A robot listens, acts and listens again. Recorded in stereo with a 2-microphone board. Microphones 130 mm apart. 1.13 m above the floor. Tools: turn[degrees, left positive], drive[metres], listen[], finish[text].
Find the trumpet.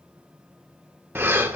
Action: listen[]
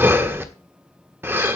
Action: listen[]
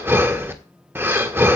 Action: finish[I can't make out a trumpet, only breathing.]